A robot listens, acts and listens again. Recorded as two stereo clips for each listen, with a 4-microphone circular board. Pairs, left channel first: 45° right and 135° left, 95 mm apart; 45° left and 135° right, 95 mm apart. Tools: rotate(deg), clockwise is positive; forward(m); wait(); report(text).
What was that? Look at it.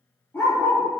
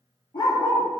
rotate(-25)
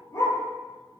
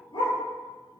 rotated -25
rotate(-10)
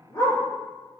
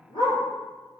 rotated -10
rotate(-10)
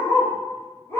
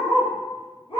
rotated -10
rotate(-20)
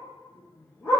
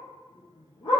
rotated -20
rotate(-20)
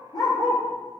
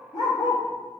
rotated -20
report("Found it: a dog barking, straight ahead.")